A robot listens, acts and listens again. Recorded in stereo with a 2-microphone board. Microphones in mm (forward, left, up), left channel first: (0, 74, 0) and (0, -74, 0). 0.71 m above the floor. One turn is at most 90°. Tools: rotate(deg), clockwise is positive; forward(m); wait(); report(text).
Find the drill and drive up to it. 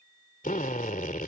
rotate(-70)
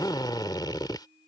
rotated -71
rotate(-30)
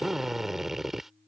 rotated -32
forward(1.0)
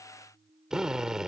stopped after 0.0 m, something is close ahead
report("Blocked. The drill is further on, straight ahead.")